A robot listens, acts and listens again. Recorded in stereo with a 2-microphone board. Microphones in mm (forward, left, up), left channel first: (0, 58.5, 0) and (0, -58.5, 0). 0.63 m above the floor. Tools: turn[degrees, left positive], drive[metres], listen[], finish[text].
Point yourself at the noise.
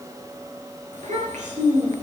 Action: turn[-90]
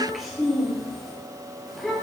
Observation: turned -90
Action: finish[Found it: a child speaking, straight ahead.]